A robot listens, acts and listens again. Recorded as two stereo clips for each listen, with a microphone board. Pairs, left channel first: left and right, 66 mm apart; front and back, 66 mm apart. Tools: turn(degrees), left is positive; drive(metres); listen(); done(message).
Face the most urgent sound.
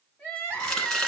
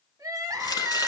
turn(degrees=155)
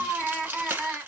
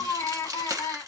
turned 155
done("Facing the crying, 1 to 2 m away.")